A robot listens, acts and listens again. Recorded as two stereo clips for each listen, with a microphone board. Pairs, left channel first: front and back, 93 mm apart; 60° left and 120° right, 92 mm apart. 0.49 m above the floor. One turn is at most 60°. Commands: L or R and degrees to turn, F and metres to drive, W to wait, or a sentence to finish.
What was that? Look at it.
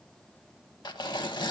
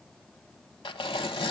L35
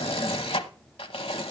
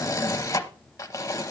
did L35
Found it: tearing paper, straight ahead, under 1 m away.